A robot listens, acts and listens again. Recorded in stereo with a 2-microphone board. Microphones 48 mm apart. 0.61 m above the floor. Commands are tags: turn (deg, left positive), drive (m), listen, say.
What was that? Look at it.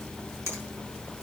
<turn deg="-75"/>
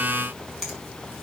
<say>Found it: a finger snap, straight ahead, over 4 m away.</say>